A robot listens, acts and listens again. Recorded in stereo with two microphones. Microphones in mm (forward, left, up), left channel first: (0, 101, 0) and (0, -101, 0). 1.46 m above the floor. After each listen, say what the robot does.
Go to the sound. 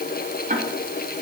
Turn 40° right.
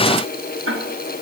Turn 100° right.
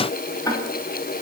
Turn 15° left.
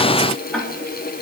Drive 1.0 m forward.
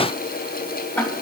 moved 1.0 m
Turn 10° left.
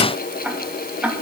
Drive 1.0 m forward.
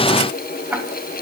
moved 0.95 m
Turn 10° right.
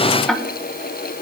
Drive 1.0 m forward.
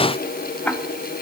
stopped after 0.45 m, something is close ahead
I am next to the ticking.